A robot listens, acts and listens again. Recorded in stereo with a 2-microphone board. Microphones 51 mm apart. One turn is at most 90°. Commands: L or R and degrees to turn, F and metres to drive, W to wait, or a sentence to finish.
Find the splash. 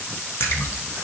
L60
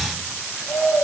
W
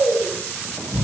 I heard a splash, but can't make it out now. It was about straight ahead or 60° left.